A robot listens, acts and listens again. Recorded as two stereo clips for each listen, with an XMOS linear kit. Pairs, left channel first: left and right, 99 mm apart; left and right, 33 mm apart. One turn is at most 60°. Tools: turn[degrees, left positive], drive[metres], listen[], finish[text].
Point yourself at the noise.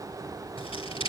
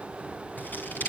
Thought: The scissors: about 70° left or 110° left.
Action: turn[60]
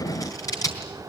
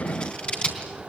Thought: So it is at 40° left.
Action: turn[40]
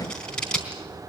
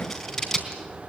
Thought: The scissors is now 10° left.
Action: turn[10]
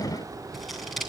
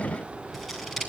Action: finish[Facing the scissors.]